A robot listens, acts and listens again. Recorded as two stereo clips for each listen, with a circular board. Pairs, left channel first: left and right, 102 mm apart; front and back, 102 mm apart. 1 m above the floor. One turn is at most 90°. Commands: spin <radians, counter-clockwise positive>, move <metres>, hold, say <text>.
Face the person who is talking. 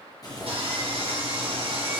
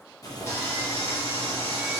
hold
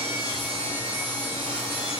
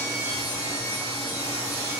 hold
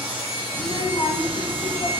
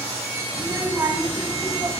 spin 1.57
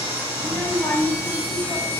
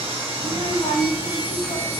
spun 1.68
spin 0.35
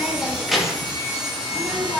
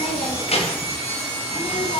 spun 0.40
say Found it: a child speaking, straight ahead, under 1 m away.